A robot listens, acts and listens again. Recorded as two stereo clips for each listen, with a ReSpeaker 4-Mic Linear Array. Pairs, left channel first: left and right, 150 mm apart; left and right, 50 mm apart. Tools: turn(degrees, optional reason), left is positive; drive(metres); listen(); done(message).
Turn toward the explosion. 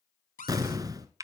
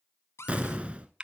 turn(degrees=-25, reason="The explosion: about 25° right or 155° right.")
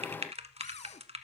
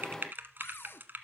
listen()
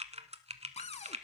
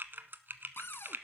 done("I heard an explosion, but can't make it out now. It was about straight ahead or 130° right.")